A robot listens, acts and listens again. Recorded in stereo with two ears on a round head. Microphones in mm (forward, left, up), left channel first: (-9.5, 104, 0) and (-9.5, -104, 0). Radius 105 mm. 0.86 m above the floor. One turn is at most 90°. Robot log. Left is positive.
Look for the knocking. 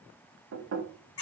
note: The knocking: about 60° right or 120° right.
cmd yaw -60
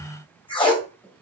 end: Found it: knocking, straight ahead, under 1 m away.